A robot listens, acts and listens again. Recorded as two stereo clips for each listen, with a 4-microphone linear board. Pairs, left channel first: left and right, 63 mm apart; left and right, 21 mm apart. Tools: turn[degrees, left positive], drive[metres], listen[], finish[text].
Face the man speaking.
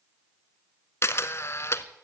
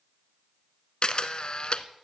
Action: listen[]
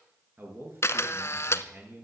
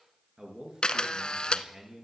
Thought: The man speaking: about 40° right or 140° right.
Action: turn[-40]
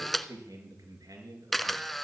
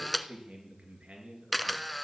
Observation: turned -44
Thought: So it is at 95° right.
Action: turn[-95]
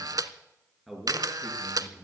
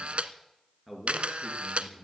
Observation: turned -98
Action: finish[Facing the man speaking, over 4 m away.]